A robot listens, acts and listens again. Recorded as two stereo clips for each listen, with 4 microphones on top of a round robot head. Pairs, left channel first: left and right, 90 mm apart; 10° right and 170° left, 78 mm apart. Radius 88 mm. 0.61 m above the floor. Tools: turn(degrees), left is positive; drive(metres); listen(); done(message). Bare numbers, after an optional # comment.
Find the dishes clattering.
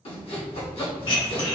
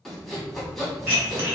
# The dishes clattering: 110° left.
turn(110)
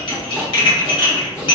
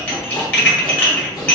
# The dishes clattering is now 55° left.
turn(55)
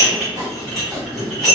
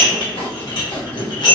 done("Facing the dishes clattering, 1 to 2 m away.")